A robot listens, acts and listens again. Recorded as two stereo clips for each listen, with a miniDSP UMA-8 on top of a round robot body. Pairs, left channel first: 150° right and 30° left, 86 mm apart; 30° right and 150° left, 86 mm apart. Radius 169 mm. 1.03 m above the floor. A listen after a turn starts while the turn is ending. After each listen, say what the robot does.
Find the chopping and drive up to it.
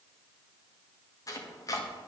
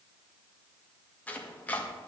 Turn 100° right.
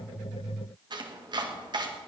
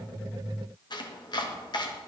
Drive 1.0 m forward.
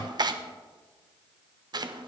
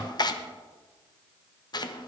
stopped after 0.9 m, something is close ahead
I am next to the chopping.